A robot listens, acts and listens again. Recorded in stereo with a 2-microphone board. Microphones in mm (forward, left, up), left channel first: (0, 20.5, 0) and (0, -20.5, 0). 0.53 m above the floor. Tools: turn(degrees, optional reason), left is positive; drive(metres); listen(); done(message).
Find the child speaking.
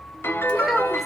turn(degrees=-30)
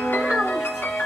listen()
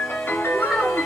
turn(degrees=-30)
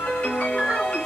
listen()
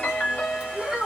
turn(degrees=-15, reason="The child speaking: about 15° right or 165° right.")
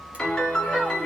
listen()
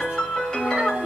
listen()
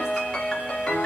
done("I heard a child speaking, but can't make it out now. It was about straight ahead or 150° right.")